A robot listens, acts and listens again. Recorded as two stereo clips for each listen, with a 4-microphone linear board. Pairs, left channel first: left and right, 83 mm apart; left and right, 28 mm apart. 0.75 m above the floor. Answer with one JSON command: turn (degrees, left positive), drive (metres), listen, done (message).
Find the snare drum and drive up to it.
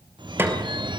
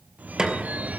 {"turn": -25}
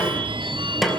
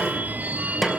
{"drive": 1.0}
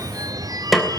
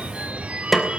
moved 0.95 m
{"drive": 1.0}
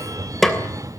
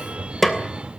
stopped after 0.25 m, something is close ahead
{"done": "Blocked. The snare drum is further on, straight ahead."}